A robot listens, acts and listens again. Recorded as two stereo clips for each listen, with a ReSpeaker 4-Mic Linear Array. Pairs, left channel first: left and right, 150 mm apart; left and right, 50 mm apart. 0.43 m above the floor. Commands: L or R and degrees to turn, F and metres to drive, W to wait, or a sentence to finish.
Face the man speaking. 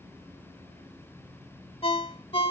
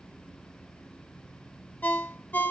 W
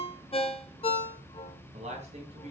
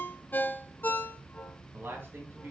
R45
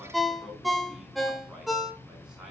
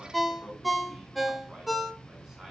Found it: a man speaking, straight ahead, over 4 m away.